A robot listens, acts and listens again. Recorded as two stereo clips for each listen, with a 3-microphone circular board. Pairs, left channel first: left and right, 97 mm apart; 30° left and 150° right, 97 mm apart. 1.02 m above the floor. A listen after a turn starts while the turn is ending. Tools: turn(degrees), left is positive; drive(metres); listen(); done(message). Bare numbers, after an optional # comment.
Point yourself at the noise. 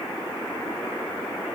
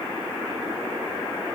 listen()
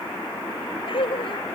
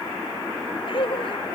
# The laughter: 60° left.
turn(60)
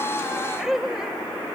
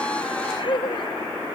done("Facing the laughter.")